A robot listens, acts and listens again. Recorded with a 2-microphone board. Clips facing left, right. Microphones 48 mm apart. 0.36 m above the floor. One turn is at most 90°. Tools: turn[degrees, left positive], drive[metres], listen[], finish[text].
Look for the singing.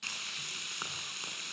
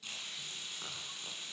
Action: listen[]
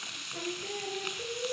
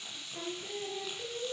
Thought: The singing: about 20° left or 160° left.
Action: turn[20]
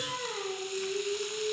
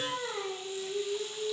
Thought: So it is at 10° right.
Action: turn[-10]
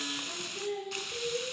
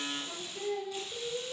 Thought: The singing is now 10° right.
Action: turn[-10]
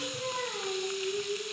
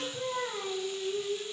Action: finish[Found it: singing, straight ahead.]